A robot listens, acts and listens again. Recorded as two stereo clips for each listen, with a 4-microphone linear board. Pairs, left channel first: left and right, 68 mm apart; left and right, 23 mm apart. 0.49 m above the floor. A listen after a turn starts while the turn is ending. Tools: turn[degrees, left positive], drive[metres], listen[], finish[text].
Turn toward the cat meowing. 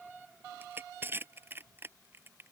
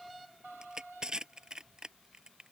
Action: listen[]
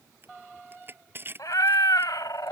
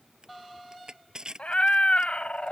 Thought: The cat meowing: about 75° left or 105° left.
Action: turn[75]
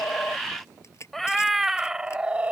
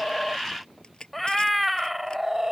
Thought: So it is at 20° right.
Action: turn[-20]
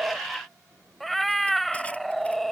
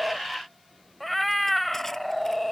Action: finish[Found it: a cat meowing, straight ahead.]